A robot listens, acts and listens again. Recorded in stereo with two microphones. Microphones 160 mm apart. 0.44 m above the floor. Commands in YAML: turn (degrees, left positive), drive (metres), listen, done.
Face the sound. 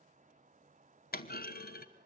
turn: 70
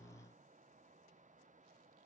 listen: true
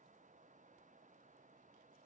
done: "I heard a clunk, but can't make it out now. It was about straight ahead or 40° left."